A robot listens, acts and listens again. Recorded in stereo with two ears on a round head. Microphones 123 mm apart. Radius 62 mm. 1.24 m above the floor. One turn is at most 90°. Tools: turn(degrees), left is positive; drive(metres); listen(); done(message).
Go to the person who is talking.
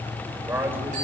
turn(degrees=-15)
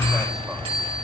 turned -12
listen()
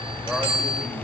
listen()
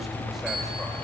done("I heard a man speaking, but can't make it out now. It was about 5° right or 155° right. I did not reach it.")